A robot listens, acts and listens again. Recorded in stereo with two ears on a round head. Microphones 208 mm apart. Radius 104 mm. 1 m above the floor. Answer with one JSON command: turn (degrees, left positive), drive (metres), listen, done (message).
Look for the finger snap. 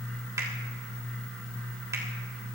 {"turn": -30}
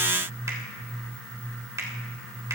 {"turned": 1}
{"turn": -30}
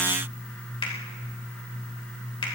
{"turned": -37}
{"turn": 20}
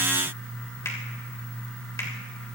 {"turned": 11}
{"turn": 10}
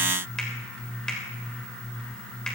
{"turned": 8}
{"done": "Found it: a finger snap, straight ahead."}